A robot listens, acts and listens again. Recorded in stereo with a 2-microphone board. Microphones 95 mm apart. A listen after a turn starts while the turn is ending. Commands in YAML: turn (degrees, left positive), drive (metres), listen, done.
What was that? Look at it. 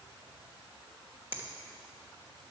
turn: -20
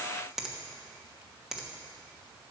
done: "Facing the finger snap, 1 to 2 m away."